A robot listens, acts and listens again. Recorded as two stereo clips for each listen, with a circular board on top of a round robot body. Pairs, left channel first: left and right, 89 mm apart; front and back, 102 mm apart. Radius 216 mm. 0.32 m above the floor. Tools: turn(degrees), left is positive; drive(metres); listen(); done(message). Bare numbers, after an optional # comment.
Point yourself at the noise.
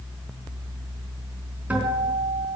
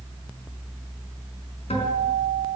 # The guitar: 20° right.
turn(-20)
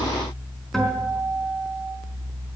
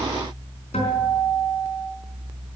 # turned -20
done("Facing the guitar.")